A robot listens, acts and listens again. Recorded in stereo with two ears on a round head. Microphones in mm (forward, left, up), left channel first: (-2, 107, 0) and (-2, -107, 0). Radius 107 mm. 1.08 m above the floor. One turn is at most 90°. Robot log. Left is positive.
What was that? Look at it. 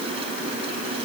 cmd idle
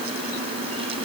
cmd idle
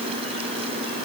end: I can't make out anything to turn to.